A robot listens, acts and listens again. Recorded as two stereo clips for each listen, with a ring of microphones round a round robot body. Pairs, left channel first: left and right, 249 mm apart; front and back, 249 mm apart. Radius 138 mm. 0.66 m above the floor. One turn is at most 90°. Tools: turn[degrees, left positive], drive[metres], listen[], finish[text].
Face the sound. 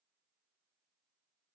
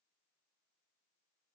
Action: listen[]
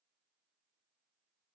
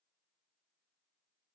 Action: listen[]
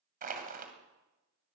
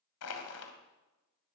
Thought: The crushing: 35° right.
Action: turn[-35]
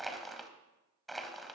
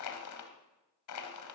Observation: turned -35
Action: finish[Found it: crushing, straight ahead, 1 to 2 m away.]